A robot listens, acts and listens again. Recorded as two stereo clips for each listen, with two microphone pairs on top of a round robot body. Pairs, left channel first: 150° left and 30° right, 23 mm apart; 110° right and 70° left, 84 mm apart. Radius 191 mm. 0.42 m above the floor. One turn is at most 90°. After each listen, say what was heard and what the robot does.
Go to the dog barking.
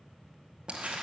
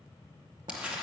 Keep listening.
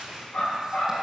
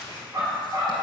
The dog barking: 120° left. Turn 90° left.
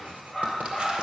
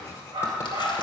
The dog barking is now 45° left. Turn 45° left.
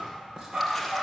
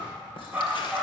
Drive 1.0 m forward.
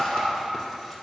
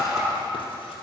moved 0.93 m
The dog barking is now 10° right. Turn 10° right.
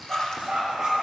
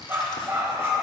Drive 1.0 m forward.
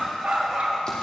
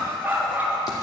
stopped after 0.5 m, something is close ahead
Arrived at the dog barking, straight ahead.